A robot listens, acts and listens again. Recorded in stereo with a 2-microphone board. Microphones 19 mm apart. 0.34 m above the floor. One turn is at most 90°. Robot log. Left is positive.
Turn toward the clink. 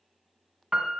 cmd idle
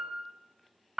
cmd idle
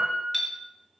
cmd yaw +30
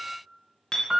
note: So it is at 135° left.
cmd yaw +90
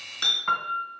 note: The clink is now 60° left.
cmd yaw +60
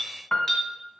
note: The clink is now 25° left.
cmd yaw +25
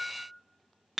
end: Facing the clink.